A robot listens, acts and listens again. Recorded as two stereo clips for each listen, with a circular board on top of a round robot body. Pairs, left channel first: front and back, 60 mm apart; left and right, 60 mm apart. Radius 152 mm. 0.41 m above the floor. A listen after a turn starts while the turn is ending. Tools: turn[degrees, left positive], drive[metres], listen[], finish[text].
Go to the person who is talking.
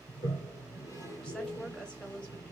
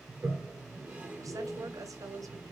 Thought: The woman speaking: 75° right.
Action: turn[-75]
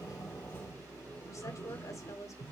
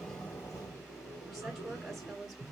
Action: drive[1.0]
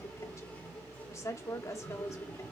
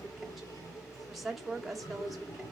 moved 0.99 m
Action: drive[1.0]
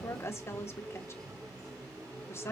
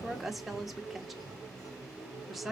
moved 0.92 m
Action: drive[1.0]
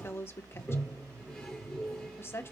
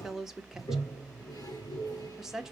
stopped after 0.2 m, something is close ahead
Thought: The woman speaking is now 10° right.
Action: turn[-10]
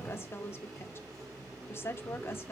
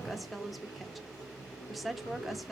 Action: finish[I am next to the woman speaking.]